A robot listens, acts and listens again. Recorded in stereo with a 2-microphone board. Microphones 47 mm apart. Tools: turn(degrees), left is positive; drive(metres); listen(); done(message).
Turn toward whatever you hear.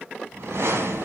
turn(degrees=-75)
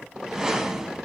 turn(degrees=-10)
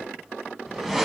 done("Found it: a whoosh, straight ahead, under 1 m away.")